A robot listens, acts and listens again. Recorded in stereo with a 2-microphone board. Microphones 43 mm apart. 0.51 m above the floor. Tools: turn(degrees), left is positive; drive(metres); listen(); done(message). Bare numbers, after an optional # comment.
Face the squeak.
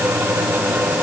listen()
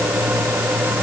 listen()
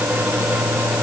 done("I can't make out a squeak.")